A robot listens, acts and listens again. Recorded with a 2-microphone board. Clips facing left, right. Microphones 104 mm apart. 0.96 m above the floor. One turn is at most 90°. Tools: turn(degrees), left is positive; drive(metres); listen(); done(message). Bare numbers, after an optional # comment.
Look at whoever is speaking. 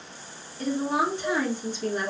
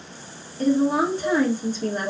# The woman speaking: about 40° right or 140° right.
turn(-40)
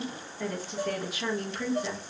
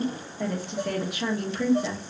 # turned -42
# So it is at 90° right.
turn(-90)
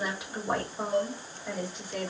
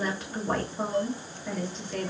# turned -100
# The woman speaking is now 10° left.
turn(10)
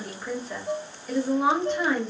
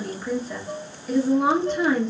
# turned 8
done("Facing the woman speaking, 1 to 2 m away.")